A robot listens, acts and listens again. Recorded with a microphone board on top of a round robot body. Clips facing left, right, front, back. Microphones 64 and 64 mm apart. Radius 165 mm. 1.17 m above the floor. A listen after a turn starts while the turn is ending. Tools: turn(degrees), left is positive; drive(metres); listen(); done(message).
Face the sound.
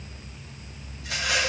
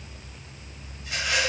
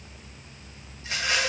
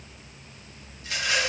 turn(degrees=65)
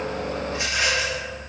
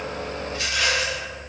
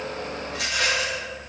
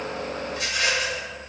turn(degrees=20)
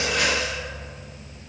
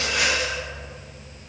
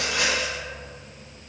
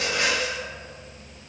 done("Facing the rattle, 1 to 2 m away.")